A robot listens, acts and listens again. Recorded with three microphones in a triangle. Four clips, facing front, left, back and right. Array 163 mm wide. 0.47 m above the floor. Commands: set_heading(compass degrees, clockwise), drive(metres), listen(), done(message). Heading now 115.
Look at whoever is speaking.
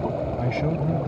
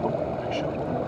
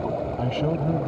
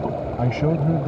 set_heading(225)
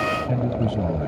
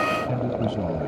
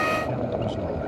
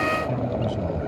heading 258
set_heading(228)
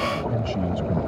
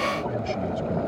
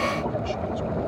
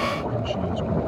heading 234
listen()
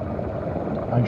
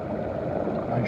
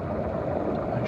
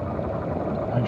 done("Found it: a man speaking, straight ahead.")